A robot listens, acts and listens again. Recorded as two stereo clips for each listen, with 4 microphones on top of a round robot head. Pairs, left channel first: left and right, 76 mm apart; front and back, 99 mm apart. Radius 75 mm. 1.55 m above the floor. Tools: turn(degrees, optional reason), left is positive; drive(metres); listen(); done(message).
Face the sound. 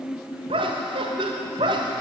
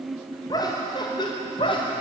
turn(degrees=-50, reason="The laughter: 50° right.")
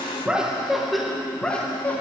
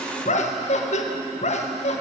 turn(degrees=10, reason="The laughter is now 10° left.")
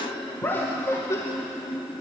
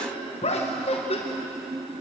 turn(degrees=25, reason="The laughter is now 25° left.")
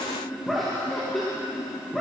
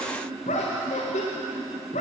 done("Found it: laughter, straight ahead.")